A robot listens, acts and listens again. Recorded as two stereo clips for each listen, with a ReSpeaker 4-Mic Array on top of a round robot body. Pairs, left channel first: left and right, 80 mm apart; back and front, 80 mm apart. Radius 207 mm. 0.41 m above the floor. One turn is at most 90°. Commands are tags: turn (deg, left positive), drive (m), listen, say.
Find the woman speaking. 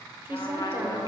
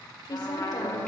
<turn deg="-90"/>
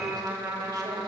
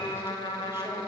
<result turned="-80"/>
<turn deg="-70"/>
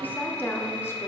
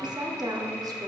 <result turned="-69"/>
<turn deg="30"/>
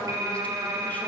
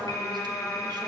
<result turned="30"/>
<listen/>
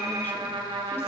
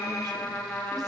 <listen/>
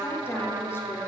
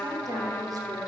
<turn deg="35"/>
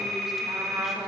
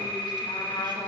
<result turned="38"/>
<listen/>
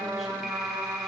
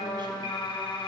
<listen/>
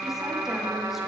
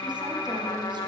<say>Facing where the woman speaking came from. I can't hear it now.</say>